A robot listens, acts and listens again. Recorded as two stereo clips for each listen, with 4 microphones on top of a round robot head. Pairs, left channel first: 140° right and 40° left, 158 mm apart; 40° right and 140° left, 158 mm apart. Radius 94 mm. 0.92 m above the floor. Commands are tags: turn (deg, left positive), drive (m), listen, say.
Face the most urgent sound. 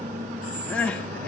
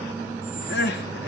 <turn deg="-60"/>
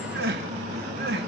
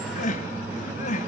<turn deg="10"/>
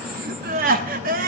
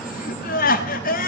<say>Found it: crying, straight ahead.</say>